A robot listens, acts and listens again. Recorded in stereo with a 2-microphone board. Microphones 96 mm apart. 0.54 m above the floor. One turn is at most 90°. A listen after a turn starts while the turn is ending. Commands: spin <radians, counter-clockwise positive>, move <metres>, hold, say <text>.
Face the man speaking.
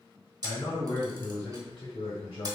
spin 1.13
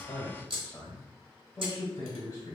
spin 0.70
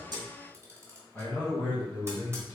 spin 0.35
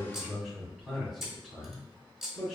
say Found it: a man speaking, straight ahead.